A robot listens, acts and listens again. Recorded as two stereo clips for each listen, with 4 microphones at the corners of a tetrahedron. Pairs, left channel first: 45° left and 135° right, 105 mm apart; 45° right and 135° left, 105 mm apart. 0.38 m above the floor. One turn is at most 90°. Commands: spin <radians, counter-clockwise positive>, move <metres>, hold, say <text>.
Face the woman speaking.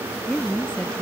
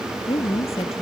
spin -0.61
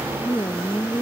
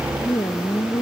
spin -0.17
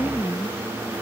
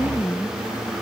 say Found it: a woman speaking, straight ahead.